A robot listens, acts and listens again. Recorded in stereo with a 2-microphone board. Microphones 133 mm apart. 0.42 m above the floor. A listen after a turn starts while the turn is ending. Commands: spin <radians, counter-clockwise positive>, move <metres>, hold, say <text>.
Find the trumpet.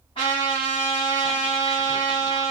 spin 0.79
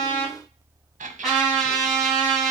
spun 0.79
say Facing the trumpet.